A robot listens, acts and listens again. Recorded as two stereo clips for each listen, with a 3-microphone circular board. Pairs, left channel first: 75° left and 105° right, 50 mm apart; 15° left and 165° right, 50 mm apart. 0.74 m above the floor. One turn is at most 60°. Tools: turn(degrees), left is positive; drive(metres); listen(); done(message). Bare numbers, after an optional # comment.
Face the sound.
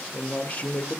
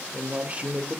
# The man speaking: 125° left.
turn(60)
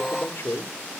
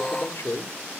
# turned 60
# The man speaking is now 40° left.
turn(40)
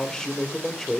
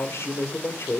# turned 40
# The man speaking is now 10° right.
turn(-10)
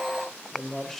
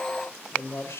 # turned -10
# The man speaking is now 10° right.
turn(-10)
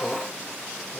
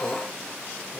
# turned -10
listen()
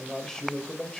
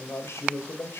done("Facing the man speaking, 2 to 4 m away.")